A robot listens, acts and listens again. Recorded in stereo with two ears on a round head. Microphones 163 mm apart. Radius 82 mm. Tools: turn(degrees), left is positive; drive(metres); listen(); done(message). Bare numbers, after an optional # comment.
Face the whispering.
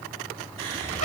# The whispering: about 35° right or 145° right.
turn(-35)
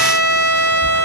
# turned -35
listen()
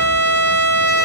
listen()
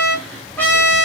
done("Found it: whispering, straight ahead, 1 to 2 m away.")